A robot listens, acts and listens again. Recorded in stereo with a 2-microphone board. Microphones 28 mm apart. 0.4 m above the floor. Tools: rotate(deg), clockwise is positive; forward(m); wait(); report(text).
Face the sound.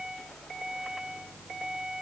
wait()
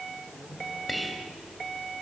rotate(-30)
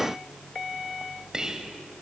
rotate(30)
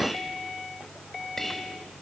rotate(-10)
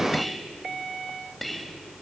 report("Facing the whispering, 2 to 4 m away.")